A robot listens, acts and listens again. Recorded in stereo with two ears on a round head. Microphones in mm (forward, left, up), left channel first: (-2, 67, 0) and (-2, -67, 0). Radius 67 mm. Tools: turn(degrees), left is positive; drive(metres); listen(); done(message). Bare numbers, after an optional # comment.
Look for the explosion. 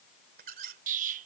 # The explosion: about 55° right or 125° right.
turn(-55)
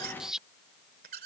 done("Facing the explosion.")